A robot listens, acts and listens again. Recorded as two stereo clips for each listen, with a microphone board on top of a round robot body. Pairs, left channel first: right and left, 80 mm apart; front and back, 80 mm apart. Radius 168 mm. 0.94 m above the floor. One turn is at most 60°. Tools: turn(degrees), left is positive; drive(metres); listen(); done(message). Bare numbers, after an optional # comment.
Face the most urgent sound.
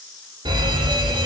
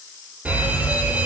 # The fire alarm: 110° left.
turn(60)
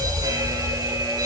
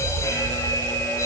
# The fire alarm is now 50° left.
turn(50)
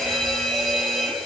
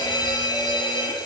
done("Found it: a fire alarm, straight ahead.")